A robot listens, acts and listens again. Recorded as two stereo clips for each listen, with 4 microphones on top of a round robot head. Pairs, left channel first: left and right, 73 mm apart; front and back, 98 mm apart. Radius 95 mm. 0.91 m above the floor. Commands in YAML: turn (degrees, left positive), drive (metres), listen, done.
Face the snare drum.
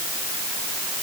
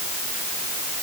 listen: true
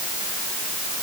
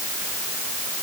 listen: true
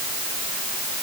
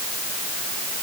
done: "I can't make out a snare drum to turn to."